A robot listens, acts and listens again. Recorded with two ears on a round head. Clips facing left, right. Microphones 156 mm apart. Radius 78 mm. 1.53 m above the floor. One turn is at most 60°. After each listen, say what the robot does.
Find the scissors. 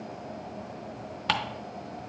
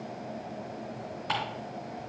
Keep listening.
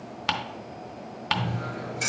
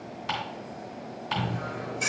Turn 30° left.
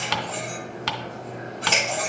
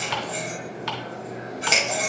Turn 20° right.
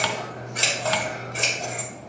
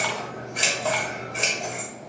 Found it: scissors, straight ahead.